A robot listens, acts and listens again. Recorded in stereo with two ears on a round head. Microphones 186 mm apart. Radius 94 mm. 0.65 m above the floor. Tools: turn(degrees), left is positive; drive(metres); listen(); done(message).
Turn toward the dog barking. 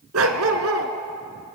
turn(degrees=-65)
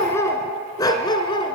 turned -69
turn(degrees=25)
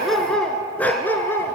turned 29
turn(degrees=10)
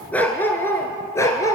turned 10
turn(degrees=15)
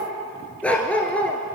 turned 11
done("Found it: a dog barking, straight ahead.")